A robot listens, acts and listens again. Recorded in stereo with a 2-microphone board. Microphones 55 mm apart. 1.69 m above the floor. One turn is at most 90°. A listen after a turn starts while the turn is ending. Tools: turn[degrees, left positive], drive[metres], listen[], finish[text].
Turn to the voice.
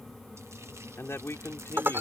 Thought: The man speaking: about 50° left or 130° left.
Action: turn[50]
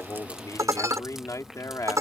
Thought: So it is at 75° left.
Action: turn[75]
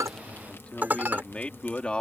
Thought: The man speaking is now 20° left.
Action: turn[20]
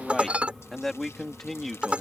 Action: finish[Found it: a man speaking, straight ahead.]